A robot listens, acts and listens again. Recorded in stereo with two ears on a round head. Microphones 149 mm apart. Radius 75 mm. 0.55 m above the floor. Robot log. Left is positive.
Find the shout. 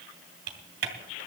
cmd idle
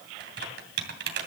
cmd idle
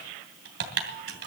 end: I can't make out a shout to turn to.